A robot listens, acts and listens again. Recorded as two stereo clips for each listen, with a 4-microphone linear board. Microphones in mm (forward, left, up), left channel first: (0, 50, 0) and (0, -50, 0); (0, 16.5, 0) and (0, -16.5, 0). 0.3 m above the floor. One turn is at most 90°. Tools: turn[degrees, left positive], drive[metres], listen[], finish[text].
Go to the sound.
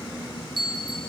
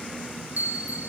Thought: The bell: about 55° right or 125° right.
Action: turn[-55]
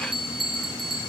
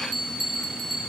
Action: drive[1.0]
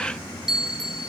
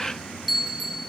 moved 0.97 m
Action: drive[1.0]
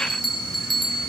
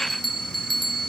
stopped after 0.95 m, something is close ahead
Action: finish[Arrived at the bell, straight ahead.]